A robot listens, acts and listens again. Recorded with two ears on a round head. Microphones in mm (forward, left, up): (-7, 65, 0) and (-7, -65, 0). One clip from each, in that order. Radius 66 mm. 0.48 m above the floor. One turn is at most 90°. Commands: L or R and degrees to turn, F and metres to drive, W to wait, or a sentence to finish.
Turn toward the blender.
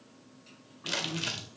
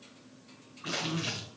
W
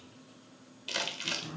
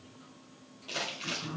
W
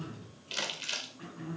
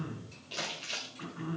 I can't make out a blender to turn to.